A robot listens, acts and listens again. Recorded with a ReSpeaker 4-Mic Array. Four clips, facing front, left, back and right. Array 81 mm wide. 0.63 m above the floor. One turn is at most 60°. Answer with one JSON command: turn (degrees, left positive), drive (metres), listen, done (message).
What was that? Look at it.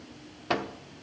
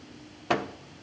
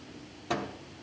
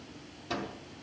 {"turn": 60}
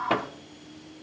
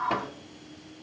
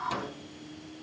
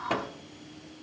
{"done": "Facing the microwave, under 1 m away."}